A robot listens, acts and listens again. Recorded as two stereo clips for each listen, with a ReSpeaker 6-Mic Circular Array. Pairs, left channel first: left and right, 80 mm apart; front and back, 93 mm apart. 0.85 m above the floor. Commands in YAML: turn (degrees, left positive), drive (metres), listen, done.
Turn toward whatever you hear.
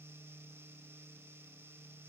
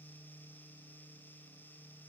listen: true
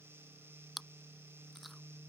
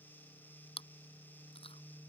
done: "Facing the chewing."